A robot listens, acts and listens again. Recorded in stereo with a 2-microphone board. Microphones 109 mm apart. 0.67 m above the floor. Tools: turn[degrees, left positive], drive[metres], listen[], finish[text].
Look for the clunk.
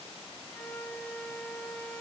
Action: listen[]
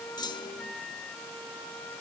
Thought: The clunk: about 40° left or 140° left.
Action: turn[40]
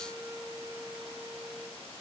Action: listen[]
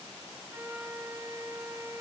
Action: finish[I heard a clunk, but can't make it out now. It was about straight ahead or 100° left.]